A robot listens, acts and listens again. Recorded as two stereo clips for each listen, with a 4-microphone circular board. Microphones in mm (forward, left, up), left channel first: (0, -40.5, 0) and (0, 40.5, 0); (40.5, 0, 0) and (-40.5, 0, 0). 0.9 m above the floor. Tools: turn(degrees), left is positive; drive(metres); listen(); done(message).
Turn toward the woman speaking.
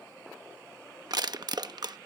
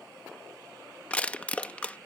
listen()
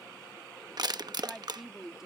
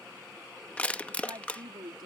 turn(degrees=175)
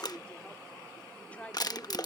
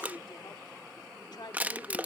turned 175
turn(degrees=-20)
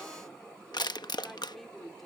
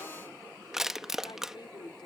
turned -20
done("Facing the woman speaking.")